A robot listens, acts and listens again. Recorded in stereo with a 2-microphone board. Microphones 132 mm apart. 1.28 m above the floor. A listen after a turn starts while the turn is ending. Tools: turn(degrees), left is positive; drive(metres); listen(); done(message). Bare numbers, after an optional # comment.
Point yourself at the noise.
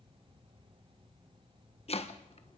# The chopping: about 50° left or 130° left.
turn(50)
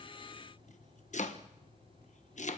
# So it is at 75° left.
turn(75)
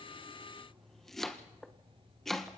done("Facing the chopping.")